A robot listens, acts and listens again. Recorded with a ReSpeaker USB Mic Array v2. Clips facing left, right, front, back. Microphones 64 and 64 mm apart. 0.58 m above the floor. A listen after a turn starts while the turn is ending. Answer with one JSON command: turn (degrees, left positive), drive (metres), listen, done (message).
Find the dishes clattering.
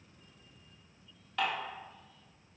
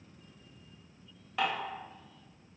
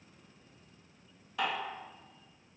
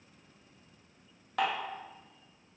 {"turn": -165}
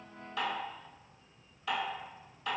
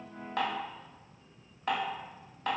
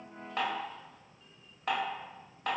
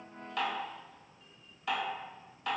{"turn": -45}
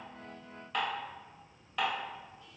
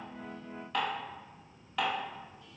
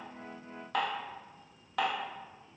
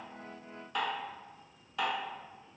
{"done": "Found it: dishes clattering, straight ahead, 1 to 2 m away."}